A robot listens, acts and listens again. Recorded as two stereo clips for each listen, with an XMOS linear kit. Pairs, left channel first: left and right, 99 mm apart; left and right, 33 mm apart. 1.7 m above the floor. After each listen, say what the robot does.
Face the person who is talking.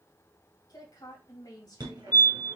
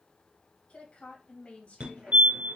Turn 40° left.
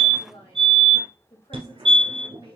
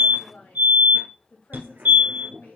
Turn 100° left.
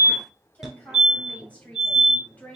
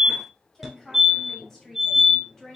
Turn 15° left.
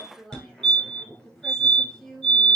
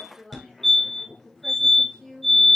Found it: a woman speaking, straight ahead.